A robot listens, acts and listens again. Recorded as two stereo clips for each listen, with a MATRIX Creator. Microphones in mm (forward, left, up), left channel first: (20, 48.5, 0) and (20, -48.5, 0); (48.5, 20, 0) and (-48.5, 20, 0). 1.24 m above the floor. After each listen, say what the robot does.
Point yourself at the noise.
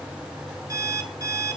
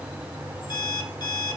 Turn 40° right.
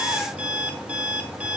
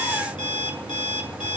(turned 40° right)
Turn 15° right.
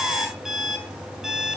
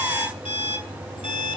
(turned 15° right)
Found it: an alarm clock, straight ahead, 2 to 4 m away.